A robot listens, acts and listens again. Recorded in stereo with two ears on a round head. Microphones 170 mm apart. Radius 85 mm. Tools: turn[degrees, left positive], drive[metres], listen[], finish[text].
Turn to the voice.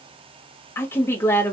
Action: turn[30]
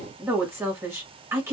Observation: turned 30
Thought: So it is at 15° right.
Action: turn[-15]
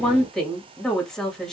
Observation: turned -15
Action: finish[Facing the woman speaking, 1 to 2 m away.]